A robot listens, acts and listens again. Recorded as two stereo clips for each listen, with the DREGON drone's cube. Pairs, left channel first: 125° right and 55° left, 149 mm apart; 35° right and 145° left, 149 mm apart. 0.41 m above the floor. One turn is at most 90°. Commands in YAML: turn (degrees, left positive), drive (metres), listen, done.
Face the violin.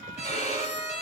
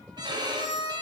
turn: -90
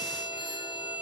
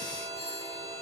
turn: -75
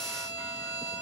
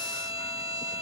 turn: 10
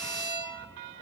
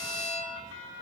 done: "Found it: a violin, straight ahead."